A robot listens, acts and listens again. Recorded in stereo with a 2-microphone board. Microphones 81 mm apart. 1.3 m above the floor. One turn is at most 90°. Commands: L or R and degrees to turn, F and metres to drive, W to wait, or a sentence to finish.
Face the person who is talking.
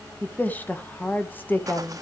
L25
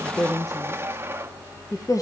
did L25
L90
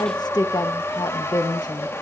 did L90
L60
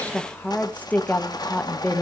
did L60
L20
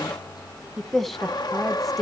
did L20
Found it: a woman speaking, straight ahead, 1 to 2 m away.